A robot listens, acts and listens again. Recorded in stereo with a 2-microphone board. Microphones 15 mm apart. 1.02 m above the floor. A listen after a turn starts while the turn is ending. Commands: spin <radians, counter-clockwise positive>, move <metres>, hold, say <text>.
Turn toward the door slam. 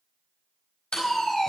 spin 1.57
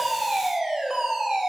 say Facing where the door slam came from. I can't hear it now.